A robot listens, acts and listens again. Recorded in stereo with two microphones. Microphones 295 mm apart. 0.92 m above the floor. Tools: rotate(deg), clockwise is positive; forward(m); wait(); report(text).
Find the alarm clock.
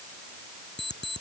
rotate(-35)
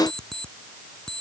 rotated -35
report("Facing the alarm clock.")